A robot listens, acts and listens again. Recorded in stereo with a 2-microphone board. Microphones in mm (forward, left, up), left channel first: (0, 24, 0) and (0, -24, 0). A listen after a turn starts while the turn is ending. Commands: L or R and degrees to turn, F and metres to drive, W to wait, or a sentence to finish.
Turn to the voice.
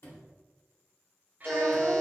R40
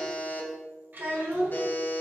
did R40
R40
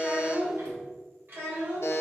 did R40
R130
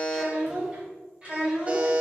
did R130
R20
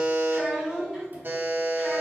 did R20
Facing the child speaking, 2 to 4 m away.